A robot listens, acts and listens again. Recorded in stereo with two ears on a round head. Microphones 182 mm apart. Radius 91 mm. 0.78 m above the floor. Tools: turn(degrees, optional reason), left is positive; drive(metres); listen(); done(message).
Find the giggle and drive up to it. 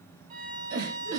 turn(degrees=-75, reason="The giggle: about 75° right or 105° right.")
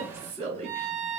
turn(degrees=-30, reason="So it is at 30° right.")
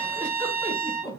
drive(metres=1.0)
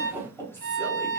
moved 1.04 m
turn(degrees=10, reason="The giggle is now 10° left.")
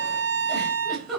drive(metres=1.0)
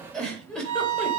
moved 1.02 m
drive(metres=1.0)
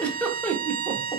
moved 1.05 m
drive(metres=1.0)
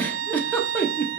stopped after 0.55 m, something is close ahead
turn(degrees=10, reason="The giggle is now 10° left.")
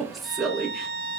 done("I am next to the giggle.")